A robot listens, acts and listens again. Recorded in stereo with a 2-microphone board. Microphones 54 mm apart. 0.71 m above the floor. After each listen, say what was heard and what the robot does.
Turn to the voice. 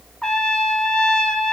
Keep listening.
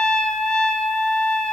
Keep listening.
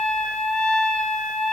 I can't make out anyone speaking, only a trumpet.